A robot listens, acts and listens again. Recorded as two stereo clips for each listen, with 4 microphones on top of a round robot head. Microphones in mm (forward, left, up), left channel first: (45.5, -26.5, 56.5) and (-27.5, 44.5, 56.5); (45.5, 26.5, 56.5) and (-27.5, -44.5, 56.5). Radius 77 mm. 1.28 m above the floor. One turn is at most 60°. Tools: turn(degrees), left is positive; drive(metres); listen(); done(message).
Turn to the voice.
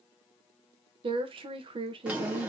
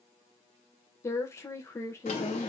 turn(degrees=60)
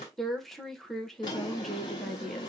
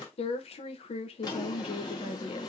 turn(degrees=45)
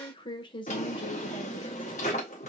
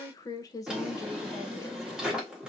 turn(degrees=-10)
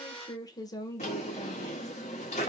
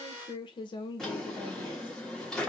done("Found it: a woman speaking, straight ahead.")